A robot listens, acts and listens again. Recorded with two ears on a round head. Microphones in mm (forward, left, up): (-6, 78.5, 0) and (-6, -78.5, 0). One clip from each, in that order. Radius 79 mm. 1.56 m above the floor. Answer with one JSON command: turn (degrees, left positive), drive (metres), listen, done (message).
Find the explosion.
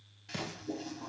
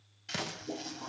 {"turn": -40}
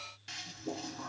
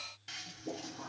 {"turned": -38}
{"listen": true}
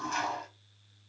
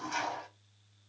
{"done": "I heard an explosion, but can't make it out now. It was about straight ahead or 105° right."}